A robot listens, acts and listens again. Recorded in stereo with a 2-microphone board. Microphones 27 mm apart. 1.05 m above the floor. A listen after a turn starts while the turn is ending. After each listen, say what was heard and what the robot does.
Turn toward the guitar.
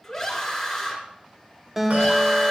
Turn 30° right.
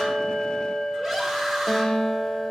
So it is at 15° left. Turn 15° left.
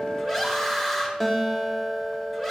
Facing the guitar, 2 to 4 m away.